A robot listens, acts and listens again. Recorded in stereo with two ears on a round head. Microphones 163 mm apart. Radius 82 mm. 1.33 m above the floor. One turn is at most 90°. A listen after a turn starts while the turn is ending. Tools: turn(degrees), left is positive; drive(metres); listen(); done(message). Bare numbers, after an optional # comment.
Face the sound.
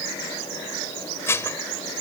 turn(30)
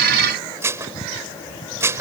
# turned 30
# So it is at 15° right.
turn(-15)
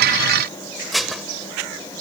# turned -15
done("Found it: dishes clattering, straight ahead.")